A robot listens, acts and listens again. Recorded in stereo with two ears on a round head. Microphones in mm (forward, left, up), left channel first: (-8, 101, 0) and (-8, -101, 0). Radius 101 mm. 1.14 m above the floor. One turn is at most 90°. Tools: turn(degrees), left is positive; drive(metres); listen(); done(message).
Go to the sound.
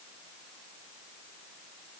listen()
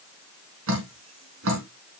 turn(degrees=-65)
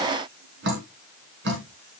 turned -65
turn(degrees=-50)
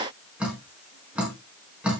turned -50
drive(metres=1.0)
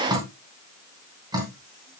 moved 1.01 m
turn(degrees=-15)
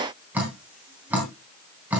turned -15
drive(metres=1.0)
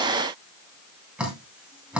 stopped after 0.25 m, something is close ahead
done("Something is in my way. I am facing the dripping but have not reached it.")